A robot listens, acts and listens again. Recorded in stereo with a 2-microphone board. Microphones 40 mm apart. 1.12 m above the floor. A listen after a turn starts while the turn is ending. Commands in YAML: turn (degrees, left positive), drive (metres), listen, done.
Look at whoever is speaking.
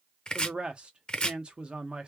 turn: -25
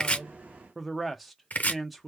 done: "Found it: a man speaking, straight ahead, under 1 m away."